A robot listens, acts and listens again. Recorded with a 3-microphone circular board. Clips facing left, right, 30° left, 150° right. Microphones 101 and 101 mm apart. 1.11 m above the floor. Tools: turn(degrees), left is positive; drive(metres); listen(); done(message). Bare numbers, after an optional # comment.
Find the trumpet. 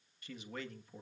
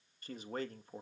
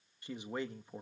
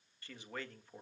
listen()
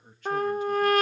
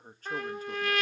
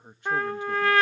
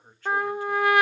# The trumpet: 135° left.
turn(135)
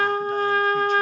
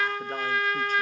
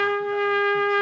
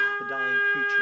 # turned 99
# The trumpet is now 40° left.
turn(40)
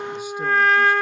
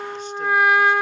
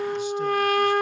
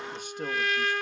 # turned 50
# The trumpet is now 15° right.
turn(-15)
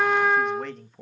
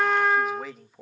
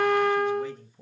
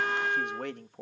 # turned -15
done("Found it: a trumpet, straight ahead.")